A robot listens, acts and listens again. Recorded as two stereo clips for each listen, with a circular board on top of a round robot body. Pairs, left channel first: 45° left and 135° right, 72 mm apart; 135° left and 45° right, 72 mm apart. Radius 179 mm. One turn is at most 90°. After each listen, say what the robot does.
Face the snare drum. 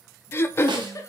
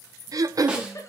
Turn 90° right.
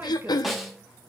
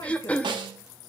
Turn 45° right.
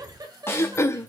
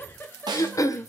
Turn 15° right.
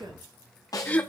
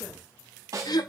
Facing the snare drum.